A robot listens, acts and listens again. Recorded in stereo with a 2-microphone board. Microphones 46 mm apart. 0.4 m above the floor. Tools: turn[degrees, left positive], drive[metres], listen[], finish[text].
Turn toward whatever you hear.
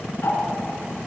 Thought: The ticking: about 55° left or 125° left.
Action: turn[55]
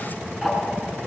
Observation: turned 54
Action: finish[Found it: ticking, straight ahead, over 4 m away.]